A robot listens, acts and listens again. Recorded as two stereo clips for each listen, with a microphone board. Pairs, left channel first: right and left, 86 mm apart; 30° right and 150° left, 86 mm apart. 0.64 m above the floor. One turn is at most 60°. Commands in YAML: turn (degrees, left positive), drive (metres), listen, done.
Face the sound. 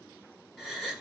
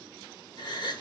done: "Found it: a gasp, straight ahead."